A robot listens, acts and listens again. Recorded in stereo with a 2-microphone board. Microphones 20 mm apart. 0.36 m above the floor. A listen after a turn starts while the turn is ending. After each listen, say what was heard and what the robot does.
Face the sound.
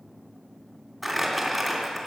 Turn 30° right.
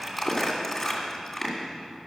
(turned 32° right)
So it is at 25° left. Turn 25° left.
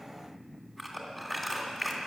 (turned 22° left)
Facing the crumpling, 2 to 4 m away.